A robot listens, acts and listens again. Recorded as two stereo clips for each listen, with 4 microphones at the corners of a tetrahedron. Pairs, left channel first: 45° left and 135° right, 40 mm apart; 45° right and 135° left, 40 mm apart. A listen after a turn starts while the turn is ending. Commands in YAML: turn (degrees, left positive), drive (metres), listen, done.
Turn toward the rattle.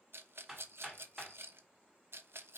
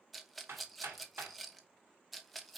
turn: -135
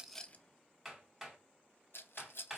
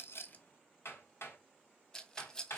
turn: 25
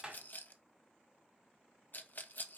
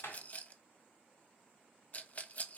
done: "Found it: a rattle, straight ahead, under 1 m away."